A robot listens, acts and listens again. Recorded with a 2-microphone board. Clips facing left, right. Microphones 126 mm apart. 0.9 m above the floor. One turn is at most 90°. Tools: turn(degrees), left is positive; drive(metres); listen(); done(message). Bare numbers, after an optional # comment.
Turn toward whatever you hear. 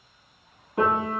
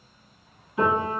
# The piano: about 55° left or 125° left.
turn(55)
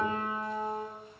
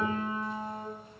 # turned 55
# So it is at 60° left.
turn(60)
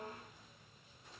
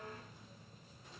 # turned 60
listen()
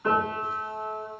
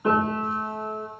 # The piano is now 15° right.
turn(-15)
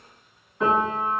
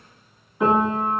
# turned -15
done("Facing the piano, 1 to 2 m away.")